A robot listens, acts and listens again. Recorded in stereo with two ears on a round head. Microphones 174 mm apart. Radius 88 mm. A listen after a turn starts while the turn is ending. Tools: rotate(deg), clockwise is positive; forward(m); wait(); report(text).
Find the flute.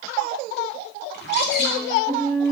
rotate(-15)
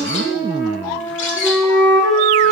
report("Found it: a flute, straight ahead.")